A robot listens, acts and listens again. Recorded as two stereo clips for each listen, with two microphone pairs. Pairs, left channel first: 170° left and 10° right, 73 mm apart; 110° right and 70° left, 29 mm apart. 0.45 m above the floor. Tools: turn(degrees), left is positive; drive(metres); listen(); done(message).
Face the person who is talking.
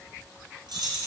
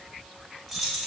listen()
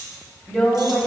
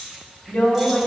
turn(degrees=-100)
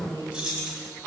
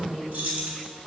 turn(degrees=-15)
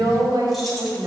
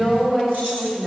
done("Facing the woman speaking, 2 to 4 m away.")